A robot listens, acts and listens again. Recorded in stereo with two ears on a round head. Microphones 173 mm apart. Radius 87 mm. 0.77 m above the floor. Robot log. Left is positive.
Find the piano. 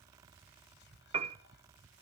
note: The piano: about 35° right or 145° right.
cmd yaw -35
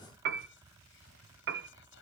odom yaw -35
note: So it is at 115° right.
cmd yaw -115
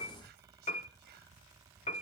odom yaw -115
note: The piano is now 30° left.
cmd yaw +30
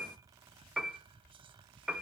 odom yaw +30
end: Found it: a piano, straight ahead, under 1 m away.